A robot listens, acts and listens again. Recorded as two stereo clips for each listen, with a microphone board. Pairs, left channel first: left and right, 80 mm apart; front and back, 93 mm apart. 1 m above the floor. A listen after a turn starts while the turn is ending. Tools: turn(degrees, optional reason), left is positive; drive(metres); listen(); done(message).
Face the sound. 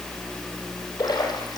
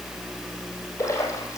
turn(degrees=60, reason="The splash: 60° left.")
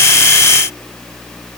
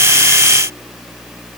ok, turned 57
done("I heard a splash from this way, but can't make it out now.")